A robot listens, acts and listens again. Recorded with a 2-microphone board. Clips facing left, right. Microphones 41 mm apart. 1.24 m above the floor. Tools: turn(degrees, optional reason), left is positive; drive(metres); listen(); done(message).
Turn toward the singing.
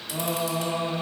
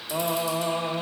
turn(degrees=-35, reason="The singing: about 35° right or 145° right.")
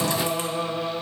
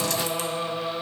turn(degrees=15, reason="So it is at 15° left.")
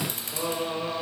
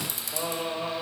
turn(degrees=10, reason="The singing is now 10° left.")
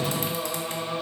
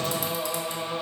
done("Facing the singing, 2 to 4 m away.")